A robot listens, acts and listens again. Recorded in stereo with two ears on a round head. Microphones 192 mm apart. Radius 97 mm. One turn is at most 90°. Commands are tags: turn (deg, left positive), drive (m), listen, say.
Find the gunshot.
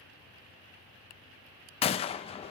<turn deg="25"/>
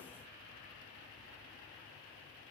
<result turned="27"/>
<listen/>
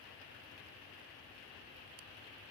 <say>I heard a gunshot, but can't make it out now. It was about straight ahead or 125° left.</say>